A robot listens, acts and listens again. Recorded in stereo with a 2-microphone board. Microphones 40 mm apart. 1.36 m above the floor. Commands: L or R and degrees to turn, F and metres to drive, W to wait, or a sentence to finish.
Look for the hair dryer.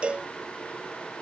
W
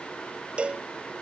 W
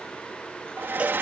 R65
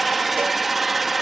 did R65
Found it: a hair dryer, straight ahead.